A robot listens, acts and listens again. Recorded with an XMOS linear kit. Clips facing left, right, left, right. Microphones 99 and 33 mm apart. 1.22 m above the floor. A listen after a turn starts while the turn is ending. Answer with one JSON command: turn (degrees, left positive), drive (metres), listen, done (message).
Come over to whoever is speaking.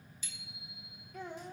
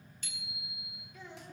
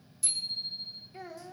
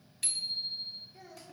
{"turn": 50}
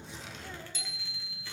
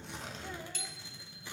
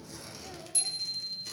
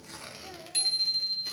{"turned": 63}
{"listen": true}
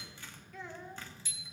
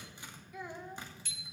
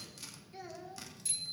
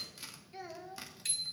{"turn": -10}
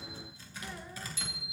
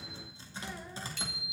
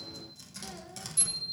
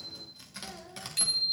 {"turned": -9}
{"listen": true}
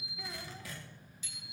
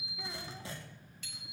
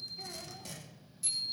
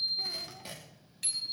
{"listen": true}
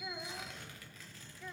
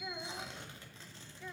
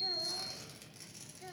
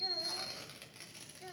{"drive": 1.0}
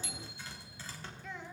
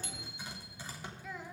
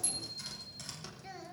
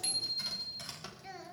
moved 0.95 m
{"drive": 1.0}
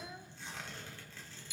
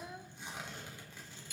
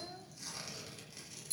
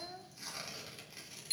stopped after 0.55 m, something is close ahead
{"turn": -10}
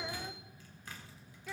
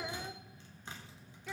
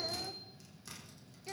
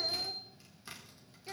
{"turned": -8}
{"done": "I am next to the child speaking."}